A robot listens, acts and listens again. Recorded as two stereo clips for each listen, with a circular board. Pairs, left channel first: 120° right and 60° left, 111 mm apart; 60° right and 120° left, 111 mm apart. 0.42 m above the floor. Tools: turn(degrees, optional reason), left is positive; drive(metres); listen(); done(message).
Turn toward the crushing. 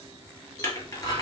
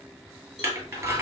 turn(degrees=-175, reason="The crushing: 175° right.")
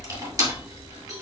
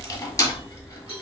done("Facing the crushing.")